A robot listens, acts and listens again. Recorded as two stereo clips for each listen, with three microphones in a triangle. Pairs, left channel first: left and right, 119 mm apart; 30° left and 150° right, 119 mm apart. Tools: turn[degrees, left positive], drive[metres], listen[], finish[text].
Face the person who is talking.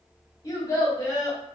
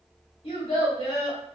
Thought: The child speaking: 40° left.
Action: turn[40]
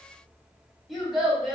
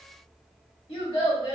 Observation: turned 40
Action: finish[Facing the child speaking.]